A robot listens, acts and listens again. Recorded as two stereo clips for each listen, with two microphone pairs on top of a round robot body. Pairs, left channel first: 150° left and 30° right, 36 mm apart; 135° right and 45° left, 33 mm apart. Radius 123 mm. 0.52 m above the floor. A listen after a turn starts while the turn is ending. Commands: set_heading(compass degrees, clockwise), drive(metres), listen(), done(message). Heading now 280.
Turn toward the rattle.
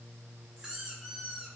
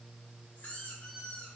listen()
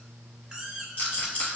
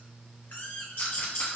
set_heading(75)
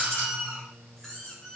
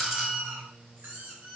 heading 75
listen()
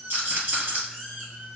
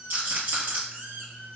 set_heading(60)
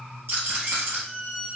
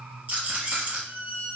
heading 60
done("Found it: a rattle, straight ahead, 1 to 2 m away.")